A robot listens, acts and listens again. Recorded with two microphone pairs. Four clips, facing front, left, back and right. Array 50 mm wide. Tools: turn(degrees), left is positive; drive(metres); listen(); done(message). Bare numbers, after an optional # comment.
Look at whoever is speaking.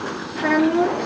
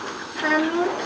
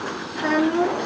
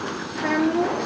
# The child speaking: 85° left.
turn(85)
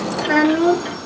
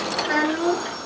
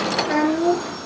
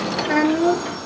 # The child speaking is now 20° left.
turn(20)
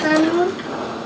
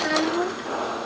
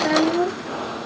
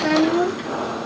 done("Facing the child speaking, 2 to 4 m away.")